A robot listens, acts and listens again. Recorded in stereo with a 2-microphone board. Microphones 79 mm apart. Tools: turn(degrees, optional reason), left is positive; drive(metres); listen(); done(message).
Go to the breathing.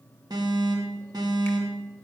listen()
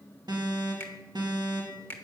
listen()
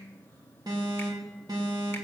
done("I can't make out breathing, only a finger snap and an alarm.")